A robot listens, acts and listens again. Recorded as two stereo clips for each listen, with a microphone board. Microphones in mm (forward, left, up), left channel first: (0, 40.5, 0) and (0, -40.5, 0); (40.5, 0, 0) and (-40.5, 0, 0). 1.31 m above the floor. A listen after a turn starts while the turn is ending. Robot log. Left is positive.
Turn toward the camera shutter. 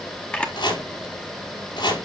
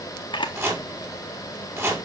note: The camera shutter: 15° left.
cmd yaw +15
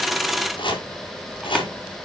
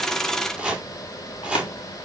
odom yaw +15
cmd idle
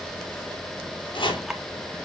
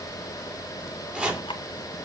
cmd idle
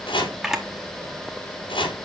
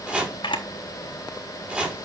end: Found it: a camera shutter, straight ahead, 1 to 2 m away.